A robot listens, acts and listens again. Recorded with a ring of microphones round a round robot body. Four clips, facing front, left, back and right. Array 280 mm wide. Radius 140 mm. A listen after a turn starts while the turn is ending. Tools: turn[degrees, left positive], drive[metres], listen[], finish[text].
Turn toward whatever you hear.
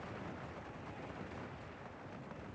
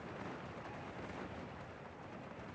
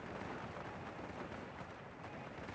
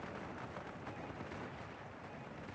Action: listen[]
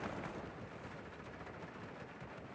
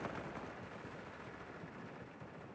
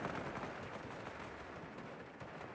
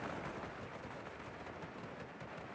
Action: listen[]
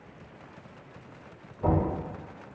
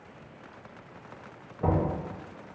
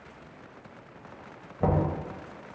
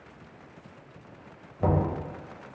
Thought: The knocking: 155° right.
Action: turn[-155]
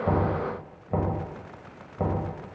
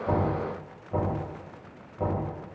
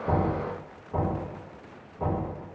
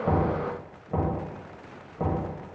Thought: The knocking is now 15° right.
Action: turn[-15]
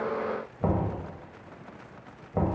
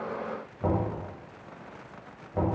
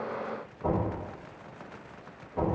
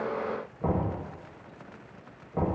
Action: finish[Facing the knocking, 1 to 2 m away.]